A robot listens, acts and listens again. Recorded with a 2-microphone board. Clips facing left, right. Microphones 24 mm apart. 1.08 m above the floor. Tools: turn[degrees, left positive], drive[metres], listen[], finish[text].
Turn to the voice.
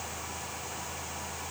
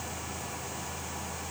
Action: listen[]
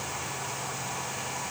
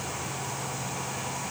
Action: listen[]
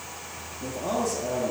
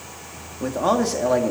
Thought: The man speaking: about 75° right or 105° right.
Action: turn[-75]
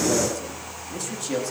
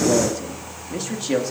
Thought: So it is at 25° right.
Action: turn[-25]
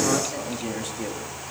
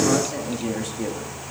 Action: finish[Found it: a man speaking, straight ahead.]